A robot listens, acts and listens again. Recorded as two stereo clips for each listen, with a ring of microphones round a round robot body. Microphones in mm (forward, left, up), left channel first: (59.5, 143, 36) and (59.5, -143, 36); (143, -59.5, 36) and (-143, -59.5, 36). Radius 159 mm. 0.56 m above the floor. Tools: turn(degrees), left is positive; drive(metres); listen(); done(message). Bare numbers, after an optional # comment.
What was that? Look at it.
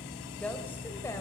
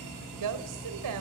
# The woman speaking: 170° left.
turn(170)
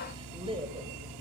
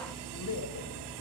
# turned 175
# The woman speaking is now 20° right.
turn(-20)
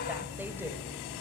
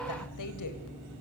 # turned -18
listen()
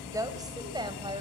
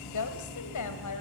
# The woman speaking is now 15° right.
turn(-15)
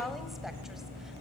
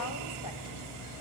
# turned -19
done("Found it: a woman speaking, straight ahead.")